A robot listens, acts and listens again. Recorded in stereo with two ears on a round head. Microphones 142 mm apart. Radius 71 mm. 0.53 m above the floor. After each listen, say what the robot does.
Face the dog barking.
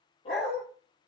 Turn 40° left.
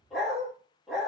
Found it: a dog barking, straight ahead.